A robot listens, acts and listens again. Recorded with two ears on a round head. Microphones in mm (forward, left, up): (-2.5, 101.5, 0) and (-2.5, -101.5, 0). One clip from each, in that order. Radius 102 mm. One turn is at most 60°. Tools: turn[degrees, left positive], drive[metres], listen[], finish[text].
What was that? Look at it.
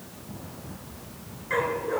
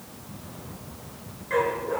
Thought: The dog barking: about 20° left or 160° left.
Action: turn[20]
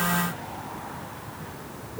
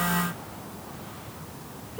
Action: listen[]
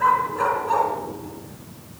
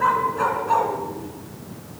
Action: turn[30]
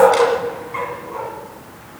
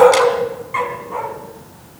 Thought: So it is at 30° right.
Action: turn[-30]
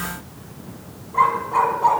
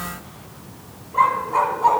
Action: finish[Facing the dog barking, 2 to 4 m away.]